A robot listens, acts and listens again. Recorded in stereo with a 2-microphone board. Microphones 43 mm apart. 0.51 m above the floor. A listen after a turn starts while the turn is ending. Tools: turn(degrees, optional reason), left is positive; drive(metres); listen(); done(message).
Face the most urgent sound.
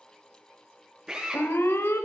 turn(degrees=70, reason="The alarm: about 70° left or 110° left.")
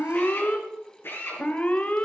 turn(degrees=35, reason="So it is at 35° left.")
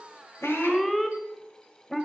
done("Facing the alarm, 1 to 2 m away.")